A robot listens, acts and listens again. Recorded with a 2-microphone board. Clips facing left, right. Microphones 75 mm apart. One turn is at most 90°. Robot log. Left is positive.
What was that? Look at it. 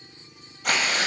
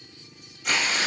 note: The tearing paper: about 55° left or 125° left.
cmd yaw +55
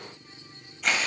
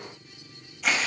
end: Found it: tearing paper, straight ahead.